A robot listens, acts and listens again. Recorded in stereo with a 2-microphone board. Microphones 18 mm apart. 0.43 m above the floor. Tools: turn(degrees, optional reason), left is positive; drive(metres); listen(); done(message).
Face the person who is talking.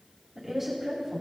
turn(degrees=-30)
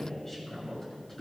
turn(degrees=15, reason="So it is at 15° left.")
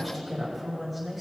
done("Facing the woman speaking, 2 to 4 m away.")